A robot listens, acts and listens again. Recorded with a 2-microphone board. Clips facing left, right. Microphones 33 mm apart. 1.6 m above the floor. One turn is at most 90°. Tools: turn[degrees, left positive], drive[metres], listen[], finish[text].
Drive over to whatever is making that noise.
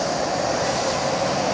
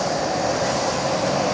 Action: listen[]
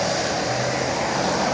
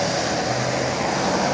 Action: listen[]
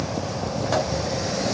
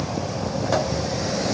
Action: finish[I can't make out anything.]